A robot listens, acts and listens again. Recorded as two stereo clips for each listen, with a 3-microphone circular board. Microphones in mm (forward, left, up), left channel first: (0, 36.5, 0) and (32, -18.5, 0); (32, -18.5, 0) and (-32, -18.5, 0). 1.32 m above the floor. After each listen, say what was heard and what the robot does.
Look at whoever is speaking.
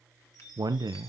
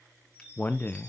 The man speaking: 60° right. Turn 60° right.
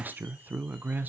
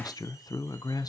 Facing the man speaking, under 1 m away.